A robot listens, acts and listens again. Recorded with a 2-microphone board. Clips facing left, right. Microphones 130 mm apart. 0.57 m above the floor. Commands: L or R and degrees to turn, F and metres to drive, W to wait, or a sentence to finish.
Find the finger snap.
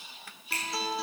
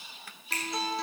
R45
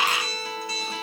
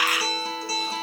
W
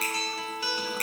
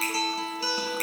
Found it: a finger snap, straight ahead, over 4 m away.